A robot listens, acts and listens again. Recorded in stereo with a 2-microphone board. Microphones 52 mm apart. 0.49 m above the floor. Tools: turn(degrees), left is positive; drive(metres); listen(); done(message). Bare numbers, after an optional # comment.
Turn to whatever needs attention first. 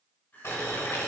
# The crying: about 45° left or 135° left.
turn(45)
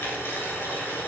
listen()
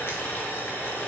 listen()
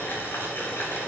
done("I heard crying, but can't make it out now. It was about straight ahead or 90° left.")